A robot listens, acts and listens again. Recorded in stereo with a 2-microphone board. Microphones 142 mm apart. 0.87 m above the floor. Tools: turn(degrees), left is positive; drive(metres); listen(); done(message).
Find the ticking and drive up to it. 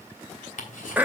turn(degrees=65)
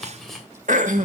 drive(metres=1.0)
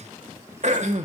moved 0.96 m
listen()
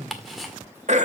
drive(metres=1.0)
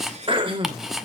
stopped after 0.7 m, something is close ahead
done("Arrived at the ticking, straight ahead.")